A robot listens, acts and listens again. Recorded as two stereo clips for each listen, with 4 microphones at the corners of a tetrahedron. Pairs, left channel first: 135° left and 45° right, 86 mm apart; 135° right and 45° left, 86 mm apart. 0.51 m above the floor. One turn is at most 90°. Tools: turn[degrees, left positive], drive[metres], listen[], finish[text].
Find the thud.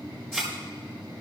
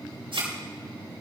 Thought: The thud: 50° left.
Action: turn[50]
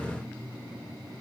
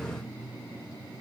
Action: finish[I heard a thud from this way, but can't make it out now.]